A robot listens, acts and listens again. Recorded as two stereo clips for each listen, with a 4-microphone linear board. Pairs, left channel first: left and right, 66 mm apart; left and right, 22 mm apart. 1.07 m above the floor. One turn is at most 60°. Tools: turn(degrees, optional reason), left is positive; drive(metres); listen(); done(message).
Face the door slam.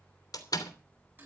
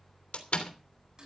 turn(degrees=60, reason="The door slam: about 70° left or 110° left.")
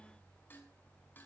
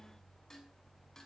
listen()
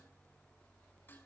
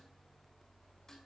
done("I heard a door slam, but can't make it out now. It was about 10° left or 50° left.")